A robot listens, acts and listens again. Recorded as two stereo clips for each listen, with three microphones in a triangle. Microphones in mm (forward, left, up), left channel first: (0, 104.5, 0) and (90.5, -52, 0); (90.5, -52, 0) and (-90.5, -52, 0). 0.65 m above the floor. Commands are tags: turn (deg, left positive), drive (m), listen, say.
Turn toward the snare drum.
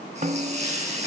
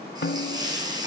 <turn deg="-15"/>
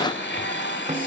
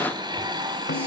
<listen/>
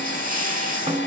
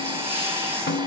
<say>Facing the snare drum, 1 to 2 m away.</say>